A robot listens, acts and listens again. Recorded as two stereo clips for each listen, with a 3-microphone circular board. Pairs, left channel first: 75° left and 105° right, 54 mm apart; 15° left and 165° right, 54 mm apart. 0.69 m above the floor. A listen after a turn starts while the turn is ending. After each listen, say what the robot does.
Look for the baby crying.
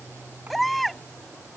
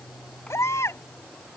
Turn 15° right.
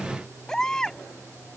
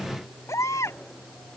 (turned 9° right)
Facing the baby crying.